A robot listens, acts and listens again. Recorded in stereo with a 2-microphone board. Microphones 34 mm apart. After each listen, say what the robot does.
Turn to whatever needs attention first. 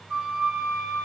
Keep listening.
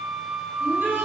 Turn 90° right.
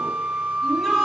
Keep listening.
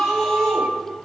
Found it: a shout, straight ahead, over 4 m away.